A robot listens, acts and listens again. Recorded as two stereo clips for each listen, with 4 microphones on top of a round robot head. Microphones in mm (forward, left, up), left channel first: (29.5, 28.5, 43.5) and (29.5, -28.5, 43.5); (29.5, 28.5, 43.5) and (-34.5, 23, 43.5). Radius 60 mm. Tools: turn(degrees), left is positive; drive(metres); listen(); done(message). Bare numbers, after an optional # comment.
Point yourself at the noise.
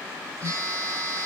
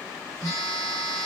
# The phone buzzing: 50° right.
turn(-50)
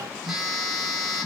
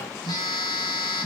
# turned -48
done("Found it: a phone buzzing, straight ahead, 1 to 2 m away.")